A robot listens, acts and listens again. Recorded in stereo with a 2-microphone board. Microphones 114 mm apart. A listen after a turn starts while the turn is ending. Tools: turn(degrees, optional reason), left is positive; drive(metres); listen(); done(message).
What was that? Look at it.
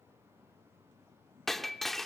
turn(degrees=30)
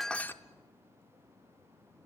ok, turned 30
listen()
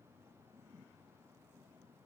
done("I heard breaking glass, but can't make it out now. It was about 30° right or 150° left.")